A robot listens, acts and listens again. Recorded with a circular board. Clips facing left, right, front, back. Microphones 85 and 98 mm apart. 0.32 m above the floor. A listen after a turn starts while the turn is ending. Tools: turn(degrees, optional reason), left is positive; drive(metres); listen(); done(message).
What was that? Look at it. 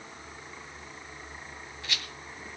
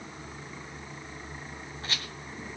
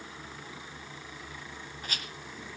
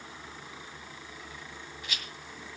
turn(degrees=-40, reason="The rattle: 40° right.")
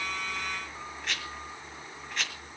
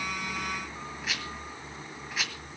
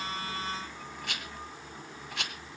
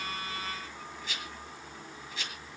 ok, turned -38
done("Facing the rattle, 1 to 2 m away.")